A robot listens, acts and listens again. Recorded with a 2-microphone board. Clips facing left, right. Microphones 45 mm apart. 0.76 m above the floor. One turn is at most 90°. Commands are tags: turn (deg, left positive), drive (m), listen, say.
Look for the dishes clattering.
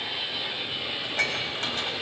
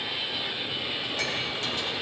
<turn deg="50"/>
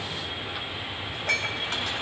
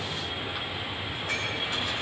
<turn deg="85"/>
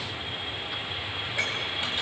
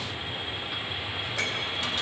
<turn deg="20"/>
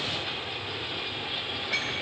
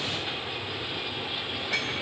<say>Found it: dishes clattering, straight ahead.</say>